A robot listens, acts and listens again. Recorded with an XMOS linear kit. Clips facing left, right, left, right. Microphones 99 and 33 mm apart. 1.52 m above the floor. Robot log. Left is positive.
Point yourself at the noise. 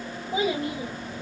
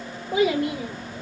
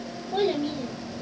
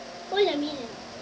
note: The child speaking: about 70° right or 110° right.
cmd yaw -70
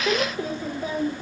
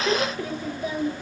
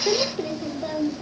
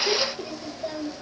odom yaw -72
note: So it is at 40° left.
cmd yaw +40
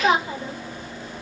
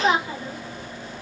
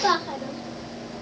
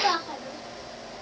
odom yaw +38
note: The child speaking is now 25° left.
cmd yaw +25
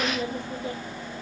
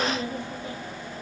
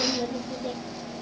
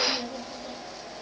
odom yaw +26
note: The child speaking is now 25° left.
cmd yaw +25
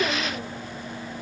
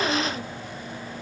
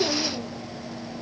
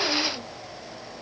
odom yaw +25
cmd idle
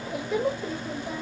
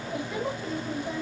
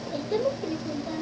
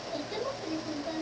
end: Found it: a child speaking, straight ahead.